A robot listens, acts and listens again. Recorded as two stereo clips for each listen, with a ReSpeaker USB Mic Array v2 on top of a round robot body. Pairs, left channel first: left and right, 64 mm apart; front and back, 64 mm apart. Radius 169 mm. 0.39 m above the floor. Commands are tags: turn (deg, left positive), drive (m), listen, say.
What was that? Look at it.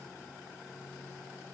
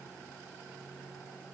<listen/>
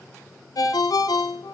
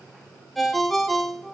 <turn deg="90"/>
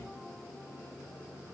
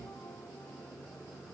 <listen/>
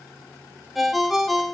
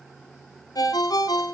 <say>Found it: a ringtone, straight ahead.</say>